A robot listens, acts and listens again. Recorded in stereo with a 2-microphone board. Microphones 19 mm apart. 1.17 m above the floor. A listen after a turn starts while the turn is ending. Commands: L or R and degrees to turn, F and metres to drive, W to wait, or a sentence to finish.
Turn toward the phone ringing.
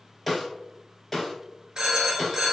R40
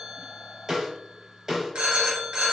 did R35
R100
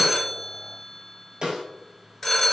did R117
L20
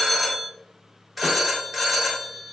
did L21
Found it: a phone ringing, straight ahead, under 1 m away.